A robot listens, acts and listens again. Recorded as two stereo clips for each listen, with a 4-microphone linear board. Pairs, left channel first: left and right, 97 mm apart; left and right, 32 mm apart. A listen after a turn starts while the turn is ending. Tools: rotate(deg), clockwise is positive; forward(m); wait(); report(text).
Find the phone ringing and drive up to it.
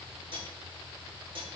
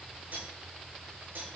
wait()
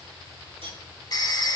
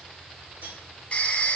rotate(-45)
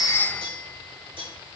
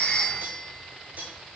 wait()
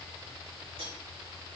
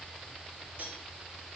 wait()
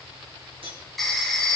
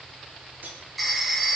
forward(1.0)
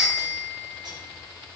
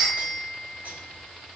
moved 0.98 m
forward(1.0)
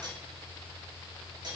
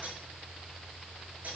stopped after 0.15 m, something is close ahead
wait()
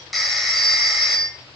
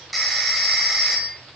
report("I am next to the phone ringing.")